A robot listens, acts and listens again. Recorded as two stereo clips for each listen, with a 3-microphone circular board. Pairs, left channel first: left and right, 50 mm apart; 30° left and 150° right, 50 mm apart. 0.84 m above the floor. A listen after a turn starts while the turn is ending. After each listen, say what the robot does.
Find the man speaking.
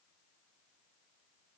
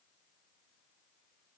Keep listening.
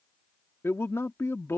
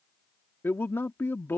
Turn 65° left.
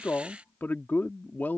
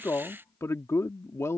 Turn 40° left.
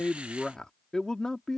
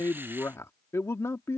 Turn 15° left.
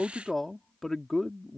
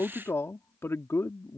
Facing the man speaking.